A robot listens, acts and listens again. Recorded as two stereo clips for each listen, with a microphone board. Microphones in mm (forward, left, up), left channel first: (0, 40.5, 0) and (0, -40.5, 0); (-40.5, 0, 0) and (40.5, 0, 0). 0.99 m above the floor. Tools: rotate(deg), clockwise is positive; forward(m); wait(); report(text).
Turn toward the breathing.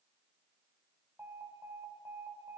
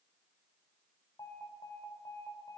wait()
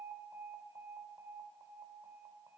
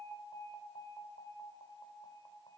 wait()
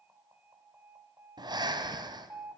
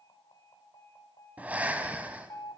rotate(70)
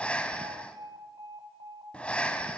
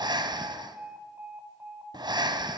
rotate(-15)
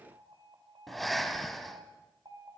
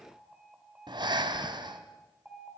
report("Facing the breathing.")